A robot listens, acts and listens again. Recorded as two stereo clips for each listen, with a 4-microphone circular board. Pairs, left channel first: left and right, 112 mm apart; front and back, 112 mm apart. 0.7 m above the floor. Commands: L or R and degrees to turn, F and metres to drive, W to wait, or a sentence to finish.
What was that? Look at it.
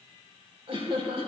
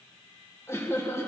R65
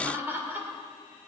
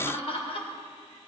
R20
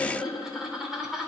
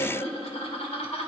Facing the laughter, 2 to 4 m away.